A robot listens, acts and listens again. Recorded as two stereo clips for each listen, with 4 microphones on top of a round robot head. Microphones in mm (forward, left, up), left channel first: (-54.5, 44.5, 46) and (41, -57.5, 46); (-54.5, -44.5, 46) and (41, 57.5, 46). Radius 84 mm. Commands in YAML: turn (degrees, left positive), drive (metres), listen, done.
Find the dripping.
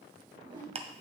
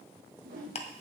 listen: true
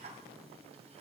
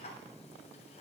listen: true
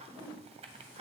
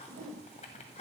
done: "I can't make out dripping, only a whoosh and ticking."